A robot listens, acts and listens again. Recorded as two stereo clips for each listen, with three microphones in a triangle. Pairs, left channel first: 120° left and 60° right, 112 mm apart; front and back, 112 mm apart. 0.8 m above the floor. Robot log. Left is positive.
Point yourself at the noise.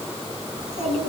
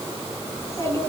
note: The child speaking: 65° right.
cmd yaw -65
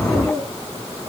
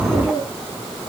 note: The child speaking is now 10° left.
cmd yaw +10
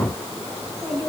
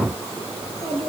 end: Found it: a child speaking, straight ahead.